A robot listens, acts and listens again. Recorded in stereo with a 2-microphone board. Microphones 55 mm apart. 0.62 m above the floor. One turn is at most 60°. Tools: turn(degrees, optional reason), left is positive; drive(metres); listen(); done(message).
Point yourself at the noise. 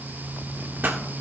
turn(degrees=-35, reason="The pop: about 35° right or 145° right.")
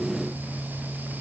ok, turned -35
listen()
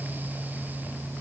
done("I heard a pop, but can't make it out now. It was about straight ahead or 110° right.")